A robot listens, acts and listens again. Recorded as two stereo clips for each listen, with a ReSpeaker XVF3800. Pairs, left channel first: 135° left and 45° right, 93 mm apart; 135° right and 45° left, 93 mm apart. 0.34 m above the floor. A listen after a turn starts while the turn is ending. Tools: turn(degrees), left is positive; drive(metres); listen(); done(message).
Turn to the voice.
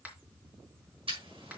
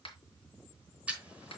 listen()
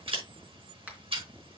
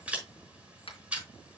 listen()
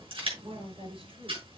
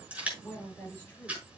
turn(degrees=-60)
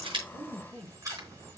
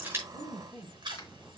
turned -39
turn(degrees=-20)
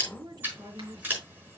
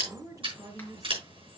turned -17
done("Found it: a woman speaking, straight ahead.")